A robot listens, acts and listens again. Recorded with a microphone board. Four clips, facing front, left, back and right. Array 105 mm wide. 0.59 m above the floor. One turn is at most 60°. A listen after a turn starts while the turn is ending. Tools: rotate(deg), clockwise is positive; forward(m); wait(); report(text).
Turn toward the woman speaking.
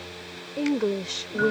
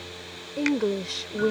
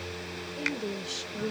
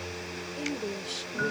rotate(-40)
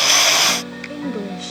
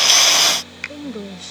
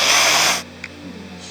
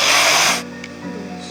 rotate(-15)
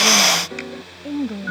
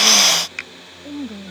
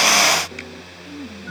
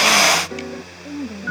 report("Found it: a woman speaking, straight ahead.")